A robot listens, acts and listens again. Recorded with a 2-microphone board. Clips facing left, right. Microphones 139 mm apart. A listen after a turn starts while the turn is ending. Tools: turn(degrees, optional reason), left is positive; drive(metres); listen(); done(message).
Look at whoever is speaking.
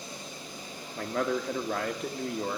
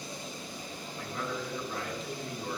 turn(degrees=70, reason="The man speaking: about 70° left or 110° left.")
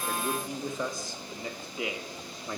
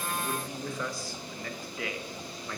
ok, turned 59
turn(degrees=20, reason="So it is at 20° left.")
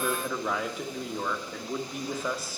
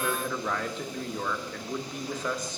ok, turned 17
turn(degrees=10, reason="The man speaking is now 10° left.")
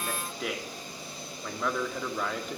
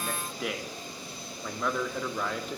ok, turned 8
done("Found it: a man speaking, straight ahead.")